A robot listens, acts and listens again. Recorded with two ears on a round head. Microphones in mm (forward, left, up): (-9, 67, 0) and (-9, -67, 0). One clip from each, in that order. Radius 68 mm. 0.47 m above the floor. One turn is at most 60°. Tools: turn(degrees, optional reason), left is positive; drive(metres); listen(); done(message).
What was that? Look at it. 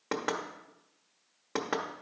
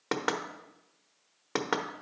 turn(degrees=-20, reason="The knocking: about 20° right or 160° right.")
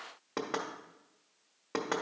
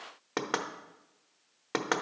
turn(degrees=-60, reason="So it is at 130° right.")
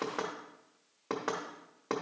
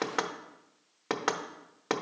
turn(degrees=-60, reason="The knocking is now 70° right.")
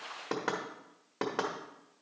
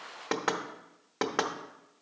turn(degrees=-25, reason="The knocking is now 25° right.")
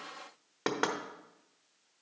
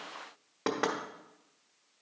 turn(degrees=30, reason="The knocking is now 30° left.")
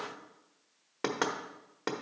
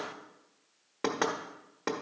turn(degrees=15, reason="The knocking is now 15° left.")
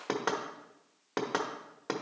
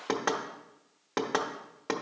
done("Facing the knocking.")